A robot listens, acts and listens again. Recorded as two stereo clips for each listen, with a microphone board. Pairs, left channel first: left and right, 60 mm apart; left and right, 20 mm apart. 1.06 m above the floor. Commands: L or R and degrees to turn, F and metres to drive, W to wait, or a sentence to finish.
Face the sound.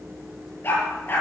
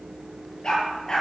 L40
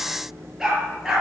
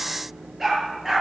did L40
R10
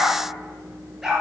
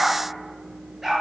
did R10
Facing the dog barking.